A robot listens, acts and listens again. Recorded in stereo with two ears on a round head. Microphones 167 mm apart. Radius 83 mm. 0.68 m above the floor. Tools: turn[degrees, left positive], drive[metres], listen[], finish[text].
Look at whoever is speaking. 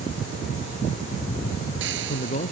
Thought: The man speaking: about 35° left or 145° left.
Action: turn[35]
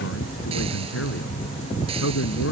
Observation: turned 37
Thought: So it is at 105° left.
Action: turn[105]
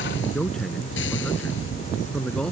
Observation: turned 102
Action: finish[Found it: a man speaking, straight ahead.]